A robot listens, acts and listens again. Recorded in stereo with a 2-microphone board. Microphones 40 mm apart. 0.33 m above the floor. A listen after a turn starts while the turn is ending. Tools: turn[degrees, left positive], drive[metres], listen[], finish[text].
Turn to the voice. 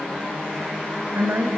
Thought: The woman speaking: about 60° right or 120° right.
Action: turn[-60]
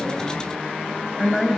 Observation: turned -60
Action: finish[Found it: a woman speaking, straight ahead.]